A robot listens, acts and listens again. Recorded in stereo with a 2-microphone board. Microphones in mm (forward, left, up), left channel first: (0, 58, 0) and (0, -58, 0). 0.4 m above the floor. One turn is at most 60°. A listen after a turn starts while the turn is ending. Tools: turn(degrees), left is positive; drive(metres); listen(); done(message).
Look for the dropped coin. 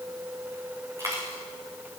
turn(degrees=-30)
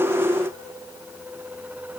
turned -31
listen()
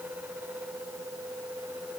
done("I heard a dropped coin, but can't make it out now. It was about straight ahead or 120° right.")